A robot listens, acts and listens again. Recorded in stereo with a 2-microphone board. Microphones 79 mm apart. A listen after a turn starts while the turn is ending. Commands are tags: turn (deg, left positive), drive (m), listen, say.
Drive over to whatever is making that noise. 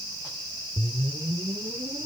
<turn deg="-55"/>
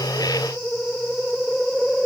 <drive m="1.0"/>
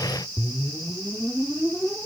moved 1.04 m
<drive m="1.0"/>
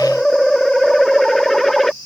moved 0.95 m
<drive m="1.0"/>
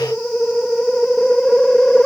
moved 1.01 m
<drive m="1.0"/>
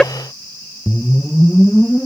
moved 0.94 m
<turn deg="10"/>
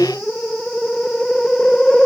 <drive m="1.0"/>
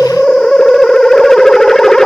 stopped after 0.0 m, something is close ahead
<say>Arrived at the whoosh, straight ahead.</say>